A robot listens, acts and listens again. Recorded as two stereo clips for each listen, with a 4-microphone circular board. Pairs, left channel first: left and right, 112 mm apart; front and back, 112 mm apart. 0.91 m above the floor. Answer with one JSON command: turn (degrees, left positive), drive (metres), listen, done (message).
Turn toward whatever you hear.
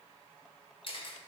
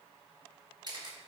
{"turn": 130}
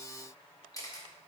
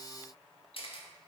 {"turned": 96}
{"turn": 30}
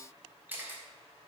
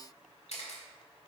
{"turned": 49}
{"turn": -15}
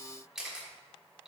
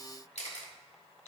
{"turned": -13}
{"done": "Facing the camera shutter."}